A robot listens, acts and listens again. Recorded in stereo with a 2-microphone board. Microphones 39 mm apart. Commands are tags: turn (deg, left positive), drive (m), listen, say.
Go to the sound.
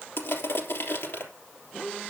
<turn deg="90"/>
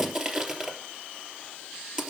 <turn deg="-15"/>
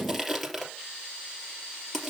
<drive m="1.0"/>
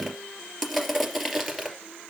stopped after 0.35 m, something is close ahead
<say>Something is in my way. I am facing the crushing but have not reached it.</say>